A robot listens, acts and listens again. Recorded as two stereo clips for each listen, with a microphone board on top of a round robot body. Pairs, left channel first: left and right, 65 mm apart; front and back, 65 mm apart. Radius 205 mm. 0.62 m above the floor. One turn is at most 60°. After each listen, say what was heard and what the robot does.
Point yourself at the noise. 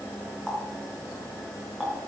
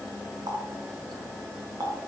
The running tap: 175° left. Turn 60° left.
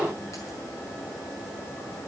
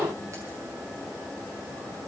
Nothing new. It was at 115° left. Turn 60° left.
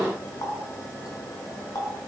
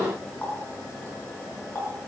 The running tap is now 65° left. Turn 60° left.
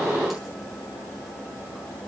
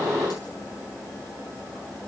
Keep listening.
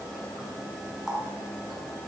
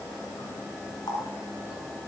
Found it: a running tap, straight ahead.